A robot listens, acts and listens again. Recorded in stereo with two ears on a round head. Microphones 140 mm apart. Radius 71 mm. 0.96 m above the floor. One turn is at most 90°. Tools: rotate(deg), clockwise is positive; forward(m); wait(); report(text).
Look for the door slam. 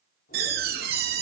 rotate(70)
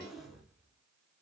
wait()
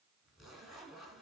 report("I heard a door slam, but can't make it out now. It was about straight ahead or 40° right.")